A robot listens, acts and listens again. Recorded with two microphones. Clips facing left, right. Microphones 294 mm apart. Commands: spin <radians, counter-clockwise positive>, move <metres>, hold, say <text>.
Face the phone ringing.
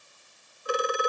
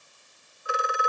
spin 0.79
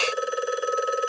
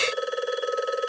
say Found it: a phone ringing, straight ahead.